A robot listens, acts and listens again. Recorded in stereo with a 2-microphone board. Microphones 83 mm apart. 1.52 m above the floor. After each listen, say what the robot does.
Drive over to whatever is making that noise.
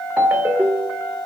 Turn 20° right.
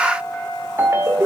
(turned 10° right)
Turn 30° right.
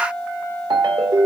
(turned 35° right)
Turn 110° right.
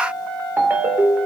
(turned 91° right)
Turn 20° right.
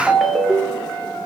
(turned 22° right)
Drive 1.0 m forward.
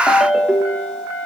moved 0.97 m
Drive 1.0 m forward.
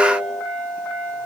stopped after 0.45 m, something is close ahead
Keep listening.
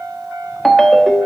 Arrived at the ringtone, straight ahead.